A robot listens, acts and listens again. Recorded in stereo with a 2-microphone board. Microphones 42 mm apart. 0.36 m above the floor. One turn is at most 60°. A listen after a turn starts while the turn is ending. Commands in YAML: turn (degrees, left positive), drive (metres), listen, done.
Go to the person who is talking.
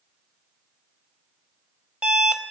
listen: true
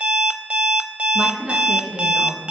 turn: -30
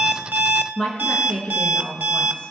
turn: 25
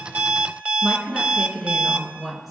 drive: 1.0
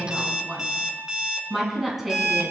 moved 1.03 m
drive: 1.0
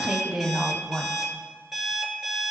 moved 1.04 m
turn: -10
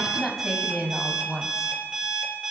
drive: 1.0
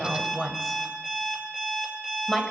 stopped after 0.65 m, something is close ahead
done: "Arrived at the woman speaking, straight ahead."